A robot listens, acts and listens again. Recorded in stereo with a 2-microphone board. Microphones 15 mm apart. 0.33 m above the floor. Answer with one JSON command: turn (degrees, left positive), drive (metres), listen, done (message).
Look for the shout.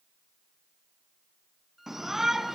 {"turn": -25}
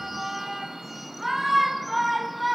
{"done": "Facing the shout."}